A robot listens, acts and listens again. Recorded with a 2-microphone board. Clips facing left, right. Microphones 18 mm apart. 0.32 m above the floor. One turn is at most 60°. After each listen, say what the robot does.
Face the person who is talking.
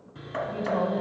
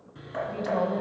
Turn 35° right.
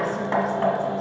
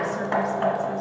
Keep listening.
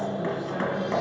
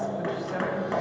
Turn 60° right.
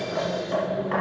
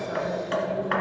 Turn 45° right.
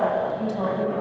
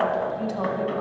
Turn 10° right.
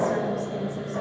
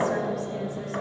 Found it: a woman speaking, straight ahead.